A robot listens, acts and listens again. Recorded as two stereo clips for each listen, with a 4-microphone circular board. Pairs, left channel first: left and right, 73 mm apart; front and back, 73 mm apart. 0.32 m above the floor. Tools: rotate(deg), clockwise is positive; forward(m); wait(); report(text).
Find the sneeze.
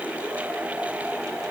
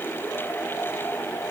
wait()
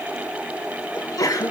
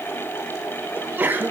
rotate(-120)
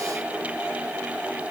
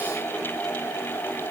report("I heard a sneeze from this way, but can't make it out now.")